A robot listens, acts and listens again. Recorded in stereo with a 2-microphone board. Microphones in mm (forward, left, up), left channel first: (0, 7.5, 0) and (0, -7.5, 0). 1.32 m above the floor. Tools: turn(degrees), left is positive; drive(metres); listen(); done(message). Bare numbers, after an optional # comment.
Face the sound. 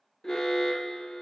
# The alarm: about 45° left or 135° left.
turn(45)
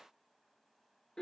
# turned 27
# So it is at 105° left.
turn(105)
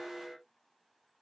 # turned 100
done("Found it: an alarm, straight ahead.")